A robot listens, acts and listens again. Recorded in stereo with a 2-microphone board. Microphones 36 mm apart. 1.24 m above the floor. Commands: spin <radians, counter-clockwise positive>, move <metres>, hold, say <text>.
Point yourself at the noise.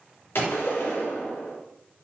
spin 1.57
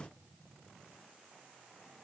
say Facing where the gunshot came from. I can't hear it now.